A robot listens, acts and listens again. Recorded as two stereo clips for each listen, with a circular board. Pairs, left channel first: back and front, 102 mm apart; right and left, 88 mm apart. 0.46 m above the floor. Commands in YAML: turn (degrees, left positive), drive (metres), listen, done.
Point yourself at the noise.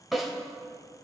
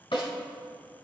turn: -90
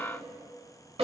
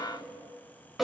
done: "Found it: a snare drum, straight ahead, over 4 m away."